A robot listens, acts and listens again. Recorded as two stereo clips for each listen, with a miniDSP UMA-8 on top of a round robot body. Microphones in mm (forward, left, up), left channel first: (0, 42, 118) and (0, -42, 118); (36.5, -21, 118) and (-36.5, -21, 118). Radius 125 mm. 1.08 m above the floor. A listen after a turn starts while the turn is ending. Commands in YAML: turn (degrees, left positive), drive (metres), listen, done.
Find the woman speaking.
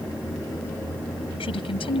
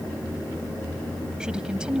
turn: 100
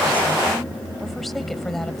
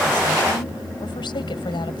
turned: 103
done: "Facing the woman speaking."